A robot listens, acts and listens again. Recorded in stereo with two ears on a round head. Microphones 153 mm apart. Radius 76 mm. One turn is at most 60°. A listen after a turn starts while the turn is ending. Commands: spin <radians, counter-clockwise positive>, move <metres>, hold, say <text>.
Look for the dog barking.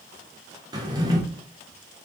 hold
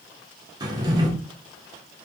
hold
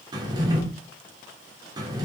say I can't make out a dog barking to turn to.